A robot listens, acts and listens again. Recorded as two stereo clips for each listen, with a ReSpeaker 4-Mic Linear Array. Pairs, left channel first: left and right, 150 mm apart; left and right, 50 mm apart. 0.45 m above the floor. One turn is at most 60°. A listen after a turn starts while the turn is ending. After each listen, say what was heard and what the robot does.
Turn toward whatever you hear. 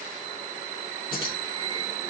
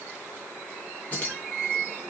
The keys jangling: about 35° left or 145° left. Turn 35° left.
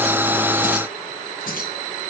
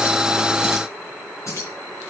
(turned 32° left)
So it is at 105° left. Turn 60° left.
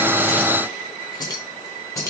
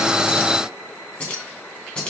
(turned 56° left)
The keys jangling is now 20° left. Turn 20° left.
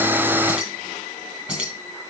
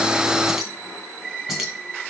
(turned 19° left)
Facing the keys jangling.